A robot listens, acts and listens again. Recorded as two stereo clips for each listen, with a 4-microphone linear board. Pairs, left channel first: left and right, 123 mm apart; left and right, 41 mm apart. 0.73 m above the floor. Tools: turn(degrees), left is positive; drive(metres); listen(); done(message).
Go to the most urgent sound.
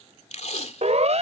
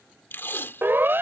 turn(degrees=-65)
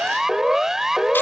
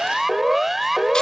drive(metres=1.0)
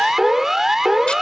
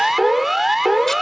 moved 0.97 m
drive(metres=1.0)
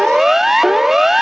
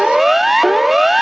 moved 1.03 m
drive(metres=1.0)
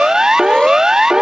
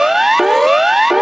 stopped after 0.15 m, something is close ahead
done("Arrived at the siren, straight ahead.")